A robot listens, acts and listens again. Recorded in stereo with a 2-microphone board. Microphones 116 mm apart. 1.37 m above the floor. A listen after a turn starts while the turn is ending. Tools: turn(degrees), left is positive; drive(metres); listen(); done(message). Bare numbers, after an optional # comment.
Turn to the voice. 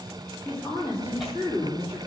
# The woman speaking: about 30° right or 150° right.
turn(-30)
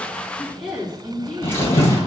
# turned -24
# So it is at 10° right.
turn(-10)
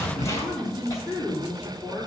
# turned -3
done("Found it: a woman speaking, straight ahead, 2 to 4 m away.")